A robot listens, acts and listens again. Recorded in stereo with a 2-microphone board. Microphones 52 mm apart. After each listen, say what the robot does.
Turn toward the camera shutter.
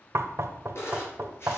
Turn 50° left.
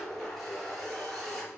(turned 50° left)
Found it: a camera shutter, straight ahead, over 4 m away.